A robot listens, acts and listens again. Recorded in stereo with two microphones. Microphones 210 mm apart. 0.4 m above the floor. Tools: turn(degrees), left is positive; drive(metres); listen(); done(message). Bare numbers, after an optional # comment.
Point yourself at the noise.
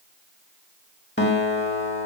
# The guitar: about 55° left or 125° left.
turn(55)
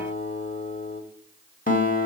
# So it is at 50° left.
turn(50)
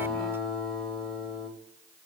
done("Found it: a guitar, straight ahead.")